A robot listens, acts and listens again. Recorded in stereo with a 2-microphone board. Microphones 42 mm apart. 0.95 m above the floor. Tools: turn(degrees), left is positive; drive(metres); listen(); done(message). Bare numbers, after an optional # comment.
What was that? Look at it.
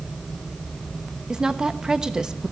# The woman speaking: about 15° right or 165° right.
turn(-15)
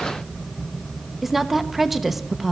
done("Facing the woman speaking, under 1 m away.")